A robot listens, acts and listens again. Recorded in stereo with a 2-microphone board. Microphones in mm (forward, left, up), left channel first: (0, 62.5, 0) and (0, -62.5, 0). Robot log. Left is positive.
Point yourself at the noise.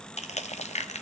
note: The crushing: about 60° left or 120° left.
cmd yaw +60
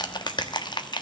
note: So it is at 40° left.
cmd yaw +40
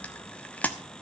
note: The crushing is now 15° left.
cmd yaw +15
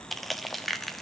end: Facing the crushing, 1 to 2 m away.